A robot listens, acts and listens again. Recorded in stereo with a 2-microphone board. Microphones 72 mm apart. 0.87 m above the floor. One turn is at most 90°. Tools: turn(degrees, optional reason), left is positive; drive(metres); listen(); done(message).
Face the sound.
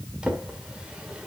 turn(degrees=-30)
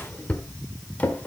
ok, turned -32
turn(degrees=20, reason="So it is at 20° left.")
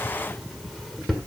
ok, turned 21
done("Facing the drawer, 1 to 2 m away.")